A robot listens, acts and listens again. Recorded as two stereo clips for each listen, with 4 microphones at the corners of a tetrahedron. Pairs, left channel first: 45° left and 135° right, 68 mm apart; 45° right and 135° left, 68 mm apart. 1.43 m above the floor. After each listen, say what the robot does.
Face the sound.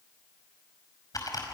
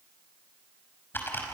Turn 15° left.
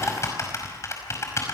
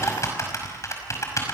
Found it: typing on a keyboard, straight ahead, over 4 m away.